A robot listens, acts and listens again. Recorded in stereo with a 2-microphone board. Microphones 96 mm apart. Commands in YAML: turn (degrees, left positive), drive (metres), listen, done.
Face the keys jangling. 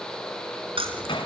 turn: -90
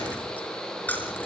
turn: 20
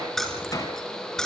turn: 10
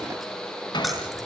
listen: true
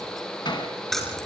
done: "Found it: keys jangling, straight ahead."